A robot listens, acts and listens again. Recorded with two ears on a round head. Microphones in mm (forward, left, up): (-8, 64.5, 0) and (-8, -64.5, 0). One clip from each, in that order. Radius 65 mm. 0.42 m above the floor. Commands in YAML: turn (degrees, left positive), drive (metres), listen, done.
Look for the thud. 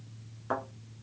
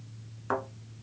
turn: -20
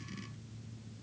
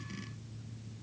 listen: true
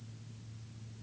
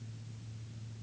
done: "I heard a thud, but can't make it out now. It was about straight ahead or 140° right."